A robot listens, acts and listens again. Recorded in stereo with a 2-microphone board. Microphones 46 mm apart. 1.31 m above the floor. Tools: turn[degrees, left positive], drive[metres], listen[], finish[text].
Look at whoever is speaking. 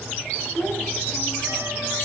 Thought: The child speaking: about 50° left or 130° left.
Action: turn[50]
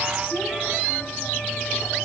Action: listen[]
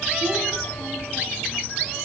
Action: listen[]
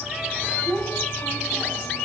Action: finish[Facing the child speaking, over 4 m away.]